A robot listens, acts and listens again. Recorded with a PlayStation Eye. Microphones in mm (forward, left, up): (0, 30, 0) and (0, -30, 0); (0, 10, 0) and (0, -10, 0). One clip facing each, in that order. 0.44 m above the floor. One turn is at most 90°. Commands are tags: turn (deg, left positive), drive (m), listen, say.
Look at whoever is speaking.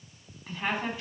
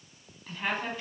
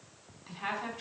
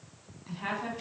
<turn deg="30"/>
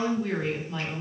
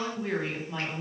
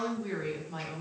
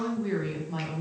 <turn deg="-20"/>
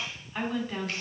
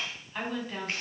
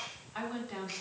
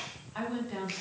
<say>Facing the woman speaking, 2 to 4 m away.</say>